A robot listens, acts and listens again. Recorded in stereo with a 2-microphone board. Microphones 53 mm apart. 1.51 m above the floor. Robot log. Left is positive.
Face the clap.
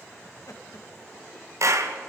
note: The clap: about 65° right or 115° right.
cmd yaw -65
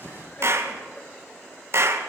note: So it is at 50° right.
cmd yaw -50
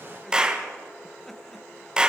note: The clap is now 15° right.
cmd yaw -15
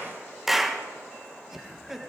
end: Facing the clap, 1 to 2 m away.